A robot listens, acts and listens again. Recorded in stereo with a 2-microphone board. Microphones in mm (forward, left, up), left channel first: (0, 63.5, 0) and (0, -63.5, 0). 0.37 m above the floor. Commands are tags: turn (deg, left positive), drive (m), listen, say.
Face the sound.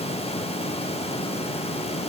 <listen/>
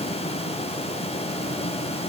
<listen/>
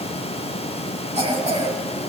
<turn deg="-65"/>
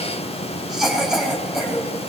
<say>Found it: a cough, straight ahead.</say>